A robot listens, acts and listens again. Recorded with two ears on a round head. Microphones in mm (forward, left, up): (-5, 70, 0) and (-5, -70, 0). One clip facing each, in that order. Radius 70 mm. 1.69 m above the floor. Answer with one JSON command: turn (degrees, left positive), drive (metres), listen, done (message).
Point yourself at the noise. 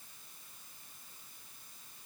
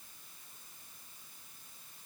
{"listen": true}
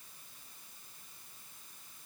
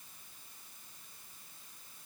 {"listen": true}
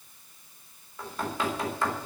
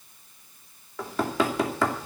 {"turn": -60}
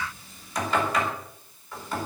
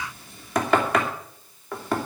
{"turn": -55}
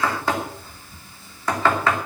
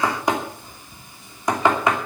{"turn": -15}
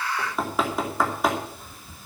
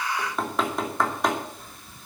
{"done": "Facing the knocking."}